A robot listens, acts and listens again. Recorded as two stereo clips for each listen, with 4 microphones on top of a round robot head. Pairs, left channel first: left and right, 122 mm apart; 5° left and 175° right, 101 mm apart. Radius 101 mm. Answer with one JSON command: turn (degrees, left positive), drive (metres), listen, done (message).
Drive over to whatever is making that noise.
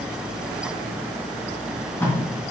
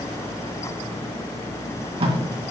{"turn": 160}
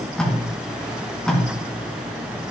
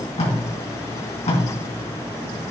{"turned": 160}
{"drive": 1.0}
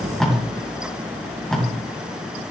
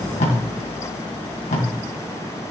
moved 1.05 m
{"drive": 1.0}
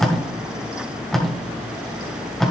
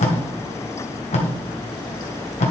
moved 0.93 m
{"drive": 1.0}
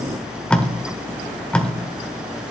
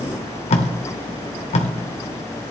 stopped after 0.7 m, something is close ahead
{"turn": 10}
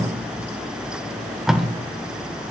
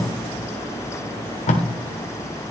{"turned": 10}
{"done": "Arrived at the tape being pulled, straight ahead."}